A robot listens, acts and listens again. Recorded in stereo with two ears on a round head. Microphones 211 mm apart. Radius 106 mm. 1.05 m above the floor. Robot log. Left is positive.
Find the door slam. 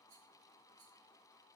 cmd idle
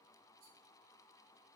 cmd idle
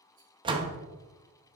note: The door slam: about 20° right or 160° right.
cmd yaw -20
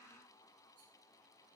cmd idle
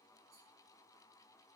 end: I heard a door slam, but can't make it out now. It was about straight ahead or 140° right.